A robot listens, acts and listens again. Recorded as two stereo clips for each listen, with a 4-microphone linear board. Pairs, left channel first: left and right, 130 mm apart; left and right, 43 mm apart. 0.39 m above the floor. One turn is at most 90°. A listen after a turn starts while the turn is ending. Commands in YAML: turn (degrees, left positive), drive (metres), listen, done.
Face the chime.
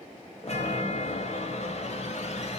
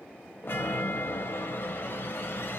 turn: 60
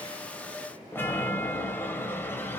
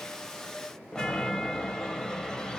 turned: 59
turn: 20
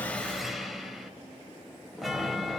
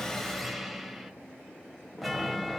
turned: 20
done: "Found it: a chime, straight ahead, 1 to 2 m away."